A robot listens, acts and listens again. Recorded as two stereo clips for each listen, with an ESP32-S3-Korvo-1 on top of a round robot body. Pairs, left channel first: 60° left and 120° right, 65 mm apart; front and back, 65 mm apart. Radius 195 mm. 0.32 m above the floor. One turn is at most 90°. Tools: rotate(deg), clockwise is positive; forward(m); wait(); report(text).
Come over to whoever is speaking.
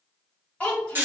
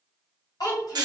rotate(10)
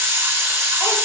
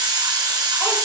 wait()
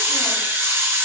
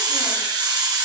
wait()
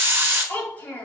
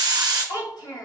forward(1.0)
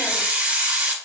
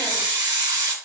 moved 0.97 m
wait()
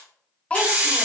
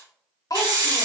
rotate(10)
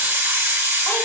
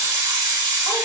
wait()
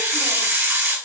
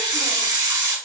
wait()
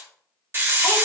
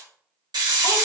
report("I heard a child speaking from this way, but can't make it out now. I did not reach it.")